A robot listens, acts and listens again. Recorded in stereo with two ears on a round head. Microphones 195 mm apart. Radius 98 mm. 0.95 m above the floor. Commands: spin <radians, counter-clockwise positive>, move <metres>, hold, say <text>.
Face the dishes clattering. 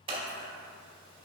hold
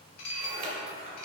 spin 1.57
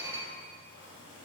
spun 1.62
spin -0.17
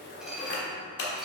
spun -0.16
say Found it: dishes clattering, straight ahead.